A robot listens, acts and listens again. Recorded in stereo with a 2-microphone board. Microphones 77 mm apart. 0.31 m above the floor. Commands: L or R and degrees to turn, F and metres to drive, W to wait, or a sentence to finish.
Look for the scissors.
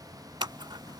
R90
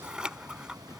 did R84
R10
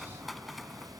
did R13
Found it: scissors, straight ahead.